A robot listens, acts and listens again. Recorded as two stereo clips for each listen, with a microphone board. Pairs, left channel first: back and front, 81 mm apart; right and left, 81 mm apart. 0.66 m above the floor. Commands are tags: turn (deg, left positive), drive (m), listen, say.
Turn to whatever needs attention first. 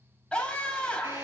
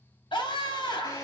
<turn deg="-100"/>
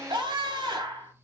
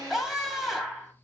<say>Found it: a scream, straight ahead.</say>